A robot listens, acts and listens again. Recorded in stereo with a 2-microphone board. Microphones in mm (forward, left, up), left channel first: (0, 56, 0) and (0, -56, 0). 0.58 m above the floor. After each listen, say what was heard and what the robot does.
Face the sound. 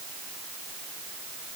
Keep listening.
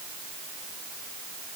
Keep listening.
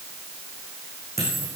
Turn 90° right.
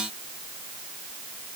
Facing where the dropped coin came from. I can't hear it now.